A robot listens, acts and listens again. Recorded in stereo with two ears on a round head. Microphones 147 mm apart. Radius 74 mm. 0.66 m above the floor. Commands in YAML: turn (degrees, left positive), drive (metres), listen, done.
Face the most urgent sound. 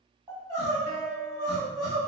turn: -30
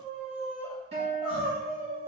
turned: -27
done: "Found it: crying, straight ahead."